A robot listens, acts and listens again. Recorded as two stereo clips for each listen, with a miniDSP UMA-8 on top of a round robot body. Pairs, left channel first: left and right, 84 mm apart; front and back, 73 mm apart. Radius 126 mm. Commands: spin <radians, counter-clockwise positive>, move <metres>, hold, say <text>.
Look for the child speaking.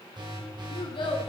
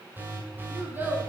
spin 2.01
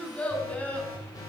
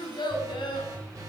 spin 0.26
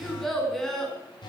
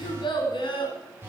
say Found it: a child speaking, straight ahead, over 4 m away.